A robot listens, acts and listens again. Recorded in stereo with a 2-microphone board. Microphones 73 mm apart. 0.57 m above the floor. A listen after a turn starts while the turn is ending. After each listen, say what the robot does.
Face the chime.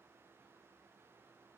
Keep listening.
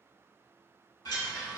Turn 70° left.
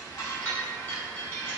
Turn 30° left.
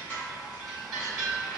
Facing the chime.